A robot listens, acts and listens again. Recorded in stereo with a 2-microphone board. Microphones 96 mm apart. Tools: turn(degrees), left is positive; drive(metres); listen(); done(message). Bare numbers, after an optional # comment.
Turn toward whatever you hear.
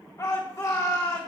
# The shout: about 35° left or 145° left.
turn(35)
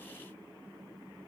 listen()
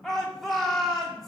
done("Found it: a shout, straight ahead, 2 to 4 m away.")